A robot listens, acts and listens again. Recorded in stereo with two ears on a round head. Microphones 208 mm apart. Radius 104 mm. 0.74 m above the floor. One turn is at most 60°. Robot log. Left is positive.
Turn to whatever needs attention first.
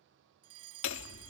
note: The fire alarm: about 75° right or 105° right.
cmd yaw -60
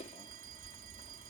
cmd idle
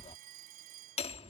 note: So it is at 40° right.
cmd yaw -40
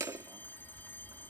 cmd idle
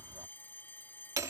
note: The fire alarm is now 10° left.
cmd yaw +10
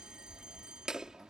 cmd idle
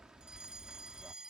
end: Found it: a fire alarm, straight ahead.